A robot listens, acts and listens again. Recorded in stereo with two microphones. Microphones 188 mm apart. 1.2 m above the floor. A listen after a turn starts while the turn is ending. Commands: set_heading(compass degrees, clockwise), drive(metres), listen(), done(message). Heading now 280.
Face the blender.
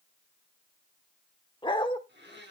set_heading(350)
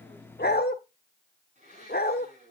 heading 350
set_heading(30)
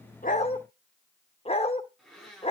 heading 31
done("Facing the blender.")